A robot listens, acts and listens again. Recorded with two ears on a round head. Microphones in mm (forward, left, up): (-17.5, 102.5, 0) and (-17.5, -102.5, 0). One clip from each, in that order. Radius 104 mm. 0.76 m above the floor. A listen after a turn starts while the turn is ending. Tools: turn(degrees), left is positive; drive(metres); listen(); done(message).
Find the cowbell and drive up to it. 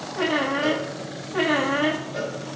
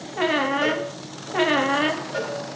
turn(degrees=-70)
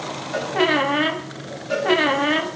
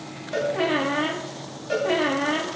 drive(metres=1.0)
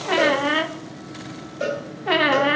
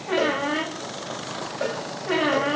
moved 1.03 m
drive(metres=1.0)
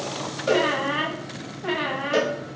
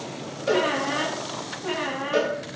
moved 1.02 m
drive(metres=1.0)
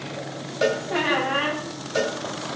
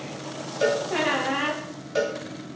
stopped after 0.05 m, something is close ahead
turn(degrees=10)
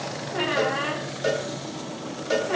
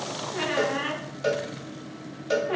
done("I am next to the cowbell.")